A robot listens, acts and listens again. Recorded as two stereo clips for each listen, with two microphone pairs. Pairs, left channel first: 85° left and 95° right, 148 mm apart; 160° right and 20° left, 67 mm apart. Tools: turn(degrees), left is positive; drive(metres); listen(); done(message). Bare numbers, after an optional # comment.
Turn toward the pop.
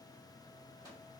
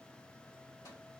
listen()
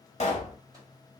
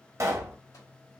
# The pop: 55° left.
turn(55)
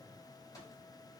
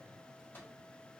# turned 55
done("I heard a pop from this way, but can't make it out now.")